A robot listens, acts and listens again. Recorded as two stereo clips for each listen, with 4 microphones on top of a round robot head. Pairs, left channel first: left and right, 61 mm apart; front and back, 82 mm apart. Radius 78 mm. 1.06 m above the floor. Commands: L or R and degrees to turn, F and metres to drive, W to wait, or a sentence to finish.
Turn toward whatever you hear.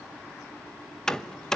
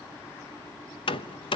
L10
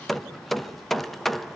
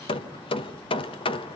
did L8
Found it: hammering, straight ahead.